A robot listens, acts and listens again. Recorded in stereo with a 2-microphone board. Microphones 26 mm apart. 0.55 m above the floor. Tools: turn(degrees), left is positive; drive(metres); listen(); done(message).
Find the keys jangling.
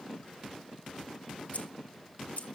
turn(degrees=70)
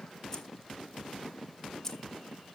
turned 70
turn(degrees=15)
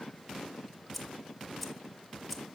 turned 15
done("Facing the keys jangling.")